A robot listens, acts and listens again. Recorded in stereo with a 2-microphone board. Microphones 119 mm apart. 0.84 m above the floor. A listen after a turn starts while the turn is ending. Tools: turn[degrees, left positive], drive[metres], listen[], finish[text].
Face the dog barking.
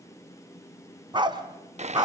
Thought: The dog barking: about 35° right or 145° right.
Action: turn[-35]
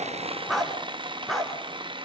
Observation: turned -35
Action: finish[Found it: a dog barking, straight ahead, 2 to 4 m away.]